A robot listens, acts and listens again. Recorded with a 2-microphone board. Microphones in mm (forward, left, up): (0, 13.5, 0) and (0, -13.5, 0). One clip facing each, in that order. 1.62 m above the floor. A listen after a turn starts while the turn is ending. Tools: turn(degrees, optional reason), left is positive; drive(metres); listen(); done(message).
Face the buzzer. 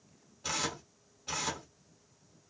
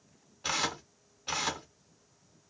listen()
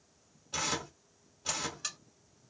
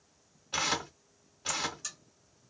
turn(degrees=45, reason="The buzzer: about 45° left or 135° left.")
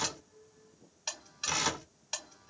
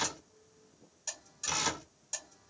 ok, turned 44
turn(degrees=80, reason="So it is at 80° left.")
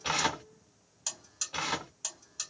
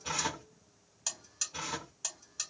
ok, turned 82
done("Found it: a buzzer, straight ahead.")